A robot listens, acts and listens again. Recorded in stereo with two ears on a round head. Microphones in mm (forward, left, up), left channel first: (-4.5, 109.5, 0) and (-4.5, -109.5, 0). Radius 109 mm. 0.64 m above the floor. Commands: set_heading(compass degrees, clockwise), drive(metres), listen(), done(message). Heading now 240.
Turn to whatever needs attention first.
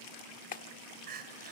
set_heading(280)
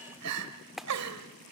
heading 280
set_heading(20)
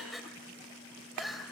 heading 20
done("Found it: crying, straight ahead, 2 to 4 m away.")